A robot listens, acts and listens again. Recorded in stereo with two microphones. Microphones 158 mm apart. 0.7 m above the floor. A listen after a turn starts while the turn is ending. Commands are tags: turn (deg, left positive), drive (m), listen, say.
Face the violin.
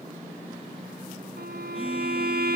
<turn deg="-90"/>
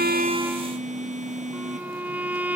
<turn deg="-10"/>
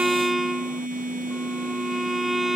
<say>Found it: a violin, straight ahead.</say>